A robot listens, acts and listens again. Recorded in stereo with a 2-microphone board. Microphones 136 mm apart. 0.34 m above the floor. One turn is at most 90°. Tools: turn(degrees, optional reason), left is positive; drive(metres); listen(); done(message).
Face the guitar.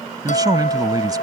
turn(degrees=65, reason="The guitar: about 65° left or 115° left.")
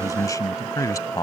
listen()
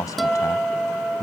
done("Facing the guitar.")